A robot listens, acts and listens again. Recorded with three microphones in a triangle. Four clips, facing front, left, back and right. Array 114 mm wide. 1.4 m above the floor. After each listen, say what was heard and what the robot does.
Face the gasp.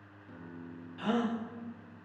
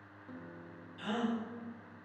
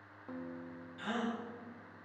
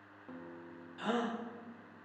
The gasp: 40° right. Turn 40° right.
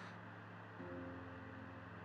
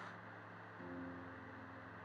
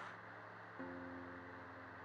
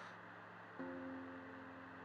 Facing where the gasp came from. I can't hear it now.